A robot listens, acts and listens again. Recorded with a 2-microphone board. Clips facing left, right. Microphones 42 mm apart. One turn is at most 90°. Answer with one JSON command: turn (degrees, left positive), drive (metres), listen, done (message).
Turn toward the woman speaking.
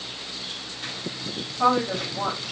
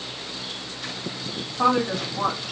{"turn": -55}
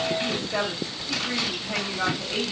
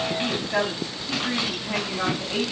{"turn": -55}
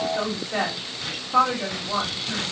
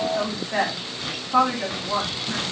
{"turn": -30}
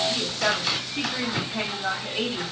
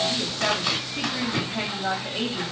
{"done": "Facing the woman speaking, 1 to 2 m away."}